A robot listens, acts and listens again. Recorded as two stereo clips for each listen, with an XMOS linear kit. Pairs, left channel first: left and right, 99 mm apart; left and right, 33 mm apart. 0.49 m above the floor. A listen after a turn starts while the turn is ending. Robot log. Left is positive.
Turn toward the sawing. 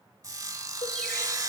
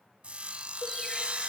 note: The sawing: about 40° right or 140° right.
cmd yaw -40
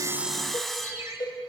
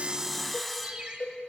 end: Facing the sawing, under 1 m away.